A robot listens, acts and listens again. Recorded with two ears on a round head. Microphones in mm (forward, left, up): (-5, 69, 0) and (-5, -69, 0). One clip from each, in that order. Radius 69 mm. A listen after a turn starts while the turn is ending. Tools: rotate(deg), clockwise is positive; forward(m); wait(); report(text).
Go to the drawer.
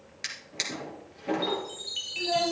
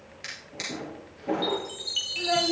rotate(-35)
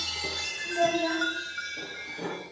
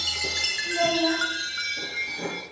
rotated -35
forward(1.0)
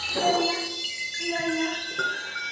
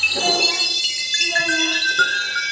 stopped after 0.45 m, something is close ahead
wait()
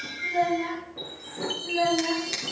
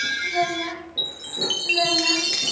wait()
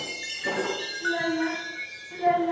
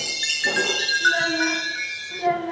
report("I heard a drawer from this way, but can't make it out now. I did not reach it.")